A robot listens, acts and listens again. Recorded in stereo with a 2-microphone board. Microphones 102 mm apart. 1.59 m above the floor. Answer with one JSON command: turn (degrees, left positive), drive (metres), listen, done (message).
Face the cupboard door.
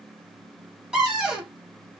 {"turn": -30}
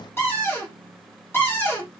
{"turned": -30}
{"turn": 25}
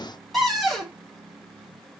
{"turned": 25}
{"done": "Facing the cupboard door."}